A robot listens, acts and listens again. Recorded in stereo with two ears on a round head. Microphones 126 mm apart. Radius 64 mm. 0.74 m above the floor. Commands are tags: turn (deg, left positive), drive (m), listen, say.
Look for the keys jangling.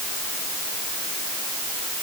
<listen/>
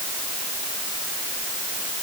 <listen/>
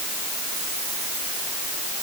<say>I can't make out keys jangling to turn to.</say>